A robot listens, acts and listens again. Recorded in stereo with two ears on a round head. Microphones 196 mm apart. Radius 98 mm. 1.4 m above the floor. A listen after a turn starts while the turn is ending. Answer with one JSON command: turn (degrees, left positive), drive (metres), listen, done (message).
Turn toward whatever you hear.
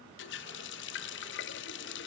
{"turn": 55}
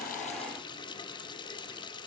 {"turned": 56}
{"turn": 25}
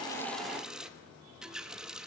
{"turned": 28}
{"done": "Facing the running tap, 1 to 2 m away."}